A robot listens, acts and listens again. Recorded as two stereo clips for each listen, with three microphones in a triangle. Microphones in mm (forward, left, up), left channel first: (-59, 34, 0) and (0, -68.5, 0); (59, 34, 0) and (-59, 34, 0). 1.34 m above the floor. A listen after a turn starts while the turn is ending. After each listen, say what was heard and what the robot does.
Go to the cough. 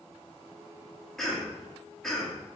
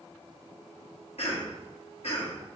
The cough: 35° left. Turn 35° left.
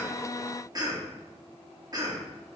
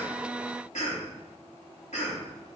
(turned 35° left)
Drive 1.0 m forward.
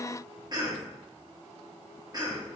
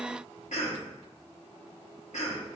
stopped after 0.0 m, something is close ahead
Something is in my way. I am facing the cough but have not reached it.